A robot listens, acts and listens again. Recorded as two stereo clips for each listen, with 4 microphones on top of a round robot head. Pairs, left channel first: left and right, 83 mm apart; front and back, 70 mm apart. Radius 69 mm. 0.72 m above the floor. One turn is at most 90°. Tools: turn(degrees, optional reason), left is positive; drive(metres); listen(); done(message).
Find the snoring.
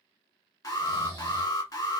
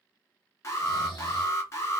turn(degrees=-30, reason="The snoring: 30° right.")
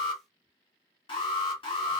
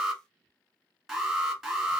listen()
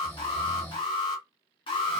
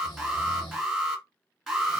turn(degrees=20, reason="The snoring is now 20° left.")
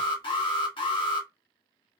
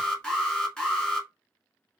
listen()
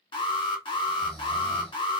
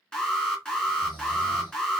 done("Found it: snoring, straight ahead.")